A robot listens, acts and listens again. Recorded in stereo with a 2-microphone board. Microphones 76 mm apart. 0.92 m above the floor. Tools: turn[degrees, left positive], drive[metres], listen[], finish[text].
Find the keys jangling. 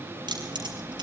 Action: turn[-90]
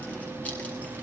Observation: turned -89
Action: listen[]
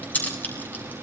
Thought: The keys jangling is now 20° left.
Action: turn[20]
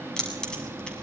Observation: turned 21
Thought: The keys jangling is now 10° left.
Action: turn[10]
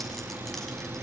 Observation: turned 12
Action: listen[]
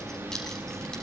Action: finish[Facing the keys jangling.]